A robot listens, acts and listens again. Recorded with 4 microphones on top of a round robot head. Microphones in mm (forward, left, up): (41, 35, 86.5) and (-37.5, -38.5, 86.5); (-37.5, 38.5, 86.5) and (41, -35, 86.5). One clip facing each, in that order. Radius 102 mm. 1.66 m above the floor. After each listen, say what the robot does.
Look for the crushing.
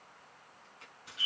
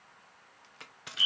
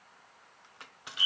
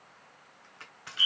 Turn 145° right.
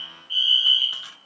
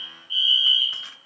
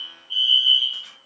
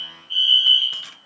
Keep listening.
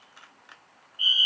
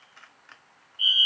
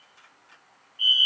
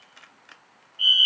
Turn 35° right.
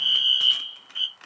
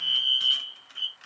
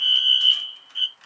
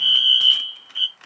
Facing the crushing.